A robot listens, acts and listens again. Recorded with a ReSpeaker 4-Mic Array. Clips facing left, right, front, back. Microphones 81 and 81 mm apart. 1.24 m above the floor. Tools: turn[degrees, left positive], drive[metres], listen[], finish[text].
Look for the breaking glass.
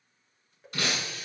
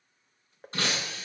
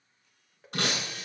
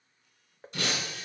Thought: The breaking glass: 30° right.
Action: turn[-30]
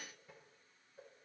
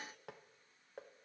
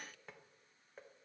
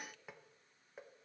Action: finish[Facing where the breaking glass came from. I can't hear it now.]